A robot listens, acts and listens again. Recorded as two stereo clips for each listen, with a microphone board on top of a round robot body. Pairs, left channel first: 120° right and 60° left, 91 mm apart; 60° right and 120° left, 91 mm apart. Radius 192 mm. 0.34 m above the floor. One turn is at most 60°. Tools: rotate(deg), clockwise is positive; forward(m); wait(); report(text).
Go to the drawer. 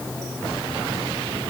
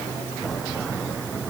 wait()
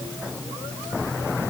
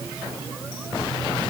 wait()
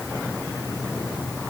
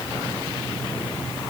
report("I can't make out a drawer to turn to.")